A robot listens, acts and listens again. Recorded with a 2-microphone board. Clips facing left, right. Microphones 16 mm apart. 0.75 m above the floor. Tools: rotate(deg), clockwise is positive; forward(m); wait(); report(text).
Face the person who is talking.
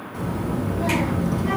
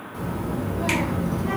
rotate(-25)
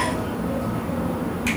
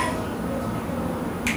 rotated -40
rotate(15)
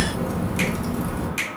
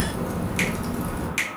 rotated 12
report("Facing the child speaking, 1 to 2 m away.")